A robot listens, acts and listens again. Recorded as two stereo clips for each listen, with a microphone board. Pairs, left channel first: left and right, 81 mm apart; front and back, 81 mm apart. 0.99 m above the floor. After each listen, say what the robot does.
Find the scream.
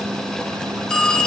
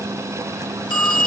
Keep listening.
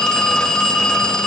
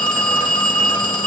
Keep listening.
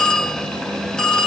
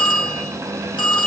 I can't make out a scream, only a phone ringing.